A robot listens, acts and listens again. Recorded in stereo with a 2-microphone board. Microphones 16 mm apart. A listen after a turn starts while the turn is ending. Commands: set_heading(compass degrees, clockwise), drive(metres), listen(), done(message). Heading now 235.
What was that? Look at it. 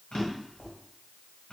set_heading(180)
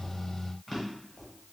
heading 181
done("Facing the drawer, 1 to 2 m away.")